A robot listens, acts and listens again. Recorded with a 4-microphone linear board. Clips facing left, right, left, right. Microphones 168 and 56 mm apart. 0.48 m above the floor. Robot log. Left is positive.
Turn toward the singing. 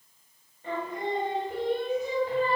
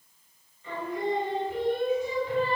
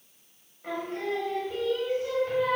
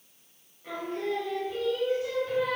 note: The singing: about 40° left or 140° left.
cmd yaw +40
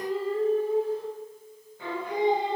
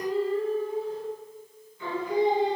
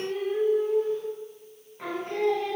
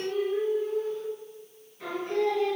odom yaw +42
note: So it is at 120° left.
cmd yaw +120
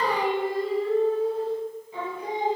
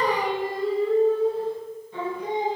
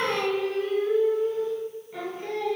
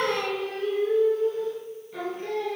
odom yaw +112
note: The singing is now 10° left.
cmd yaw +10
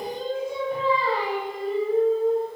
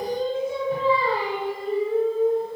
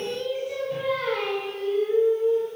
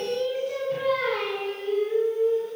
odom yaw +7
end: Found it: singing, straight ahead, 2 to 4 m away.